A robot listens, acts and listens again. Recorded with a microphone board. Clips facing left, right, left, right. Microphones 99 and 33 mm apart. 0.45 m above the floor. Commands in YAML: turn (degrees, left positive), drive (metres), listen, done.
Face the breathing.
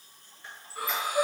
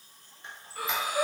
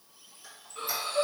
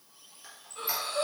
turn: 30
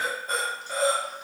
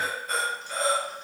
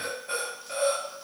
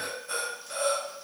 turn: 140
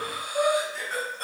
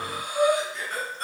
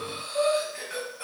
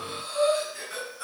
turn: 50
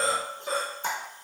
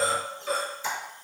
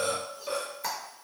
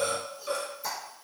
turn: 15
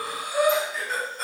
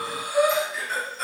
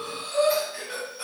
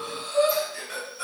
turn: 10
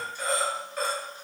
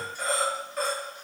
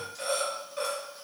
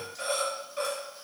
done: "Facing the breathing."